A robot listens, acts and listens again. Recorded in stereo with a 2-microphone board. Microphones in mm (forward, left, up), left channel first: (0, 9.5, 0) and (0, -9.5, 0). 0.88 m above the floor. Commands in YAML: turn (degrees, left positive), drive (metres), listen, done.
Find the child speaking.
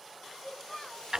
turn: 75
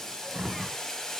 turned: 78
listen: true
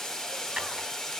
listen: true
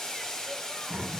done: "I heard a child speaking, but can't make it out now. It was about 5° right or 25° left."